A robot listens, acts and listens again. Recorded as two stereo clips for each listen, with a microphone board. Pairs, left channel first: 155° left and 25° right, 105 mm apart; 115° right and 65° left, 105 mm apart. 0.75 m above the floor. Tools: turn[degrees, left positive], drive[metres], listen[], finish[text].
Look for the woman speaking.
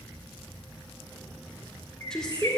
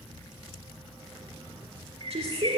Thought: The woman speaking: 75° left.
Action: turn[75]
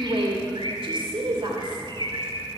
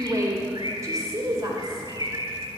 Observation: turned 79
Thought: The woman speaking is now 15° left.
Action: turn[15]
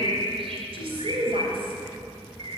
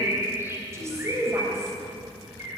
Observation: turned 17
Action: finish[Found it: a woman speaking, straight ahead, 2 to 4 m away.]